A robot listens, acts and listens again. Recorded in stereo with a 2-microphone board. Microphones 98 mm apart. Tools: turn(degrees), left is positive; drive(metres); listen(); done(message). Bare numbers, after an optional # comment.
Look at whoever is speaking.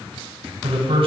# The man speaking: about 70° right or 110° right.
turn(-70)
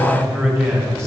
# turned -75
# So it is at 25° right.
turn(-25)
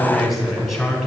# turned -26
done("Found it: a man speaking, straight ahead, 2 to 4 m away.")